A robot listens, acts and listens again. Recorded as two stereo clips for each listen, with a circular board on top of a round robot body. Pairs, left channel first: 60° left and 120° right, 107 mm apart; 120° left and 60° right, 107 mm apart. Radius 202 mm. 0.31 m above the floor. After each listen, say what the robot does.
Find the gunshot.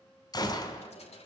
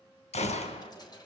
Turn 115° left.
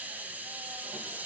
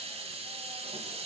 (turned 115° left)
Facing where the gunshot came from. I can't hear it now.